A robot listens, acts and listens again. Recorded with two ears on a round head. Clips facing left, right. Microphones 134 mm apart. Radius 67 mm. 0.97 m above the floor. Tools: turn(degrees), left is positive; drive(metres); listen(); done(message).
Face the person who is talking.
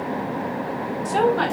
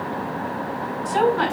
turn(degrees=60)
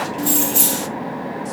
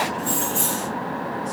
listen()
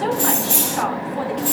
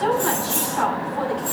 turn(degrees=60)
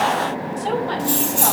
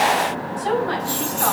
turn(degrees=25)
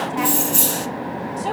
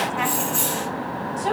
turn(degrees=10)
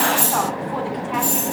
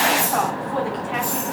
done("Facing the woman speaking, over 4 m away.")